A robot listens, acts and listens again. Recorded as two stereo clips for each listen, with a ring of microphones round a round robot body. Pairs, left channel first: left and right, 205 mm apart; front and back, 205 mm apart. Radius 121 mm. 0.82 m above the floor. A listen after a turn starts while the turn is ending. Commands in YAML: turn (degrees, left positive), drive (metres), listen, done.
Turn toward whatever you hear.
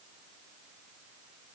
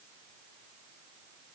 listen: true
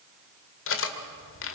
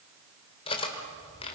turn: 70
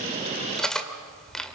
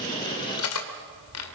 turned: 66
done: "Found it: cutlery clinking, straight ahead, 1 to 2 m away."